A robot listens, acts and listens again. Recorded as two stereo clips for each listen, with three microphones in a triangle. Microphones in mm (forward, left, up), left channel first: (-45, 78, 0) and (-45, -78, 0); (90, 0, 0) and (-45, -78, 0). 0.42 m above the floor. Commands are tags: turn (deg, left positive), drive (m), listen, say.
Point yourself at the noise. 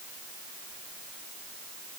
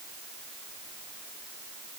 <listen/>
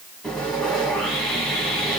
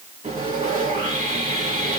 <turn deg="175"/>
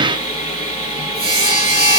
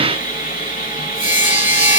<turn deg="55"/>
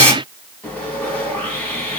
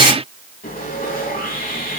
<turn deg="10"/>
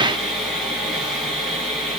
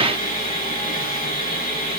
<say>Facing the sawing, 1 to 2 m away.</say>